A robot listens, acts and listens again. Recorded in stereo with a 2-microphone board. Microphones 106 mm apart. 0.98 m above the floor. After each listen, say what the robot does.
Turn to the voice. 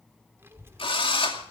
Turn 25° right.
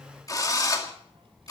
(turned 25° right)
Turn 125° right.
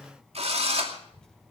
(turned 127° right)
Facing the child speaking.